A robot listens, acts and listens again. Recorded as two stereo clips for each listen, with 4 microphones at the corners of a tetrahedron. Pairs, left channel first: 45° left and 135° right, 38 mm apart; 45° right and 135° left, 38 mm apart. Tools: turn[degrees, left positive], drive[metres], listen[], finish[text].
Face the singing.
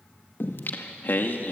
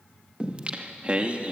Thought: The singing: 80° left.
Action: turn[80]
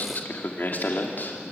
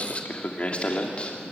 Thought: The singing is now 15° left.
Action: turn[15]
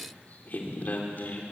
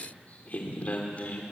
Action: finish[Found it: singing, straight ahead.]